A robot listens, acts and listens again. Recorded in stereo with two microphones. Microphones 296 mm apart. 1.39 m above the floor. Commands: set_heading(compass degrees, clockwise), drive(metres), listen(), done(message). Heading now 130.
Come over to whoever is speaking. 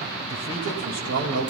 set_heading(190)
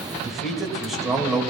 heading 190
drive(1.0)
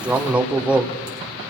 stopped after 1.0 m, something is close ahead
done("I am next to the man speaking.")